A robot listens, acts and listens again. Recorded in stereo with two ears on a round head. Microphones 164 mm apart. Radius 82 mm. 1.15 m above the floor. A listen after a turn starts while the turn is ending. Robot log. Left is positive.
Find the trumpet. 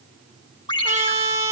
note: The trumpet: about 15° right or 165° right.
cmd yaw -15
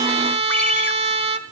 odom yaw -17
note: So it is at 150° right.
cmd yaw -150
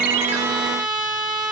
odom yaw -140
end: Facing the trumpet.